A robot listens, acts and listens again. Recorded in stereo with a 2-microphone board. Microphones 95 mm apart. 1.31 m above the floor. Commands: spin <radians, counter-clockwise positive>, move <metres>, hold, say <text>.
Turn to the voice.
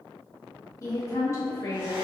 spin 0.61
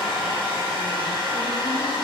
hold
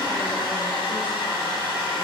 hold
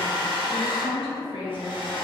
spin 1.92
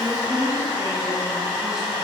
spin -0.17
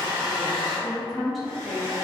say Found it: a woman speaking, straight ahead, under 1 m away.